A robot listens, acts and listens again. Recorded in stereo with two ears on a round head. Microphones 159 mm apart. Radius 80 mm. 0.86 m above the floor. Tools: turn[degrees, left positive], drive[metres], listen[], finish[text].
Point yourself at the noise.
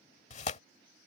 Thought: The tearing paper: about 40° left or 140° left.
Action: turn[40]
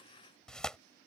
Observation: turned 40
Action: finish[Facing the tearing paper.]